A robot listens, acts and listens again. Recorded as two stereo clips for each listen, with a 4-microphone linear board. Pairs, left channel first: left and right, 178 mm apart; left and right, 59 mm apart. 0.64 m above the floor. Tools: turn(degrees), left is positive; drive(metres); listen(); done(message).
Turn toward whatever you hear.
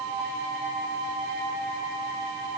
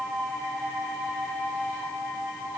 listen()
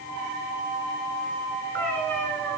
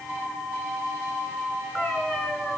turn(degrees=30)
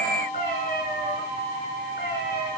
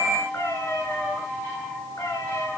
turn(degrees=125)
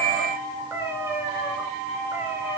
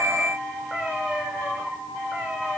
turn(degrees=-10)
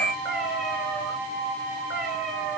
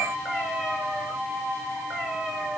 done("Found it: a cat meowing, straight ahead.")